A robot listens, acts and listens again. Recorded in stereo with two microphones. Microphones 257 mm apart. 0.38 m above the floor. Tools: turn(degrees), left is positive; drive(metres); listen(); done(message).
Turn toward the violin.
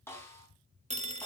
listen()
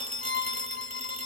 turn(degrees=45)
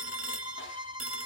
turn(degrees=90)
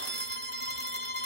turn(degrees=35)
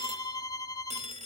turn(degrees=15)
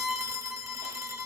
done("Facing the violin, under 1 m away.")